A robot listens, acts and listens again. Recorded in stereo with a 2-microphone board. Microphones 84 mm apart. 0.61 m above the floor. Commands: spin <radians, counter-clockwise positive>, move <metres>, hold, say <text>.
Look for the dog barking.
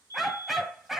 spin -0.52
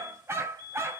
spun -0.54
spin -2.62
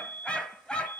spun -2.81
spin 0.17
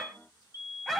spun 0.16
say Found it: a dog barking, straight ahead.